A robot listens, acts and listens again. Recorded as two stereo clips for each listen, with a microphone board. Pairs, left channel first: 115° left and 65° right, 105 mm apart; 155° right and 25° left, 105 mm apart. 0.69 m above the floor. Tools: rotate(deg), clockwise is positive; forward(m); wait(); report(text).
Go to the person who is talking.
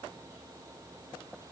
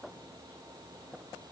wait()
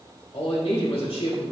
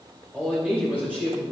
rotate(-100)
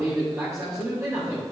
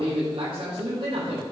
forward(1.0)
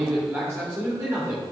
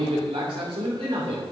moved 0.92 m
forward(1.0)
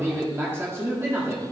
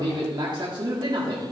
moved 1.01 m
rotate(10)
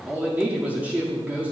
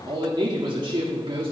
forward(1.0)
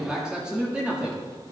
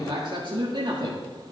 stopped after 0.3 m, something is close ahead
rotate(-10)
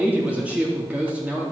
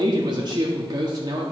report("Arrived at the man speaking, straight ahead.")